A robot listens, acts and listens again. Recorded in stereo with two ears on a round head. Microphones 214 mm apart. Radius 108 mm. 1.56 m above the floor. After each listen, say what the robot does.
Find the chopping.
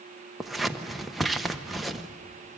Keep listening.
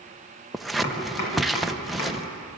Turn 90° left.
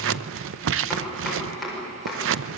Facing the chopping.